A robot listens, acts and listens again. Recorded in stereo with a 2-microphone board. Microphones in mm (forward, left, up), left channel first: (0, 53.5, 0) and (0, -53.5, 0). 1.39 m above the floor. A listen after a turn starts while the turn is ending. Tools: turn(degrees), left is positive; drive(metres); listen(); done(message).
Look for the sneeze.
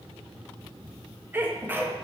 turn(degrees=-20)
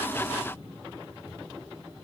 listen()
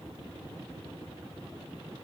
done("I heard a sneeze, but can't make it out now. It was about straight ahead or 140° right.")